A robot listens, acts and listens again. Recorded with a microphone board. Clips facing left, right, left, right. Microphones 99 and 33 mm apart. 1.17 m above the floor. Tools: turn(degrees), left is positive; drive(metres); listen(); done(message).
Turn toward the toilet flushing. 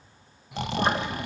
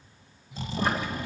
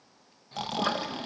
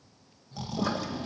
turn(degrees=25)
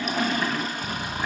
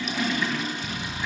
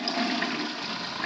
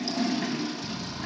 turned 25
turn(degrees=125)
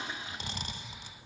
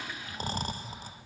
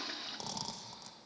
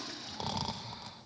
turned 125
turn(degrees=25)
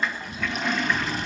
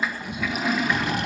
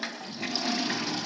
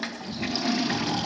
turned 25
done("Found it: a toilet flushing, straight ahead, 1 to 2 m away.")